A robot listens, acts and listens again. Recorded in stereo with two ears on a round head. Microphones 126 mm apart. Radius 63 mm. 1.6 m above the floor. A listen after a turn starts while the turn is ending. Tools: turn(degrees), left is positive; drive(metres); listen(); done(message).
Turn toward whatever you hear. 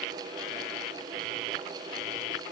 listen()
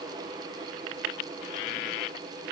listen()
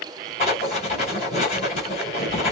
turn(degrees=50)
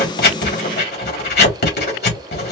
turn(degrees=80)
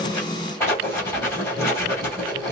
turn(degrees=20)
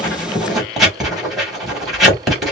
done("Facing the writing, 2 to 4 m away.")